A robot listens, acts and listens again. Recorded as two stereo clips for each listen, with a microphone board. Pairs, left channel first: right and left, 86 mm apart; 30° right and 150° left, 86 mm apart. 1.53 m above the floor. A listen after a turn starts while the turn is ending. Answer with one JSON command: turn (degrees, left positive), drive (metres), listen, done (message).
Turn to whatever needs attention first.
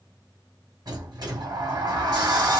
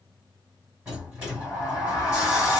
{"listen": true}
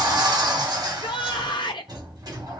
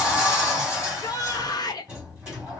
{"turn": -70}
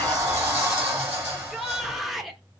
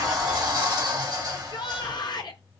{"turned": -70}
{"done": "Found it: a shout, straight ahead."}